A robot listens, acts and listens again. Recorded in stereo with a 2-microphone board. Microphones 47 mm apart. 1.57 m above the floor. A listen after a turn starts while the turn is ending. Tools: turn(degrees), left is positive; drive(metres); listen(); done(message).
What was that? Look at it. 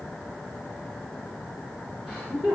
turn(degrees=-30)
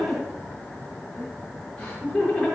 turn(degrees=15)
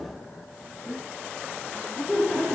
done("Facing the laughter, over 4 m away.")